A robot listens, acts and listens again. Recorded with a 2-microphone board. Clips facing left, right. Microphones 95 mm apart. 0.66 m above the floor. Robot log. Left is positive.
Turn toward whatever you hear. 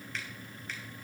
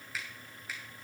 cmd yaw -30
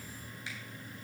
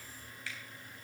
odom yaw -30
note: So it is at 20° left.
cmd yaw +20
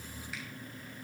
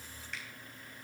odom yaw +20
cmd idle
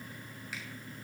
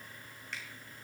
end: Facing the finger snap, 2 to 4 m away.